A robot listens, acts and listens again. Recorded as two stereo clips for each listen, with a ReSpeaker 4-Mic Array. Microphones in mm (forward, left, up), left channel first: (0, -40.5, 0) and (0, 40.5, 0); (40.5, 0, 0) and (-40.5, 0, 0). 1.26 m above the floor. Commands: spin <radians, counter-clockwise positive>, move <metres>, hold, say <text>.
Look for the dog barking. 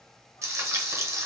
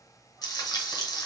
hold
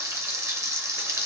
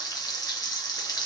hold
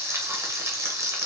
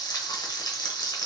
say I can't make out a dog barking to turn to.